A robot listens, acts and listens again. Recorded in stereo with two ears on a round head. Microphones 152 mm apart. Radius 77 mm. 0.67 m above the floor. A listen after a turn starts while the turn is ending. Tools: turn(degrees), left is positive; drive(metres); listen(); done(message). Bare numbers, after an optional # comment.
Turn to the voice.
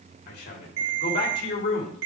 # The man speaking: about 65° left or 115° left.
turn(65)
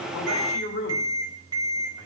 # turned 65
# So it is at 45° left.
turn(45)
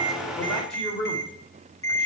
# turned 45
done("Found it: a man speaking, straight ahead.")